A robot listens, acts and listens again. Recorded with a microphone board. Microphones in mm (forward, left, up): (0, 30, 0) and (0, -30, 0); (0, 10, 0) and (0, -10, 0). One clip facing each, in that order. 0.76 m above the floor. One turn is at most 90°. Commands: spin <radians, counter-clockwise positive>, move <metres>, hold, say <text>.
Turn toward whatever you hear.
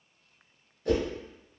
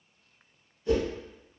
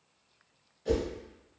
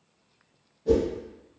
spin 1.13
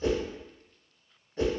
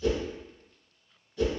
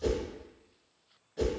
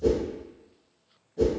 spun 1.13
spin 0.79
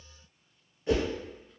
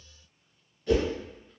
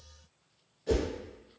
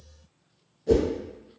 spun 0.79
spin 0.44
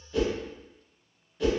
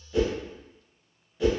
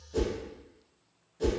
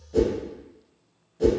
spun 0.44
say Found it: a whoosh, straight ahead, 1 to 2 m away.